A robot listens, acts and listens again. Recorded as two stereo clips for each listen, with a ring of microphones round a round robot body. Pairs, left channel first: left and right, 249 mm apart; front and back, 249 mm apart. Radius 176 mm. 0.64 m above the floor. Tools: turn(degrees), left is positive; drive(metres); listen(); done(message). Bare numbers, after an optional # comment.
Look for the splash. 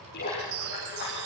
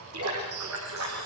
# The splash: 155° left.
turn(155)
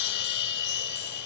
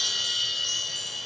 done("I heard a splash from this way, but can't make it out now.")